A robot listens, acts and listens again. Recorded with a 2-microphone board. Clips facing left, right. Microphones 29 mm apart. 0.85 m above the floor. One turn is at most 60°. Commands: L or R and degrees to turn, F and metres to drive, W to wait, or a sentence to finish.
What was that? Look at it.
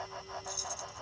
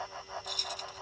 R60
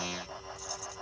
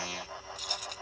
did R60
R60
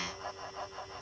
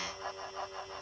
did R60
W
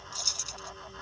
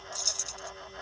L20
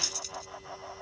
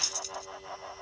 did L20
W
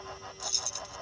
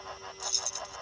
Facing the keys jangling.